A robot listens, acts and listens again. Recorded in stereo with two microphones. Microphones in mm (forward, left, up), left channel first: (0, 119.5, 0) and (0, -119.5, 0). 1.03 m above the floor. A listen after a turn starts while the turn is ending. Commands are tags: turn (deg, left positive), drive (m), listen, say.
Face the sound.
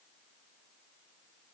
<listen/>
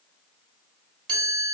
<turn deg="-60"/>
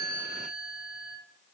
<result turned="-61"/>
<turn deg="-10"/>
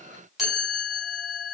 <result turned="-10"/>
<say>Facing the chime.</say>